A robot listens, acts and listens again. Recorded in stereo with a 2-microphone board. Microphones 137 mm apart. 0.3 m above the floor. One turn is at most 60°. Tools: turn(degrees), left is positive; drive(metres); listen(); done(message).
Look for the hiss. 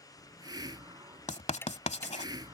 turn(degrees=-30)
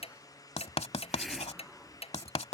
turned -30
done("Facing the hiss.")